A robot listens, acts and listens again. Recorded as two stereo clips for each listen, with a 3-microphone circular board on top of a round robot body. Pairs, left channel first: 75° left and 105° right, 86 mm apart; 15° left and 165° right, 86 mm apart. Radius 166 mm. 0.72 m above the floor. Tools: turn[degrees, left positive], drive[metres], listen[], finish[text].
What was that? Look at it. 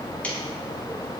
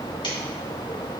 Action: listen[]
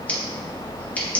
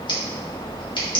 Action: finish[Found it: scissors, straight ahead.]